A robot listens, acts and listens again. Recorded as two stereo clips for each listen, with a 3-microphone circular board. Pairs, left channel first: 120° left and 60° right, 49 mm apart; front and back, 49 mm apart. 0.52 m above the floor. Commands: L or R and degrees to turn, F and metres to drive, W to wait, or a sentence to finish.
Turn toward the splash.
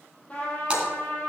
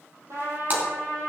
R130
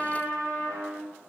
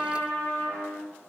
I heard a splash from this way, but can't make it out now.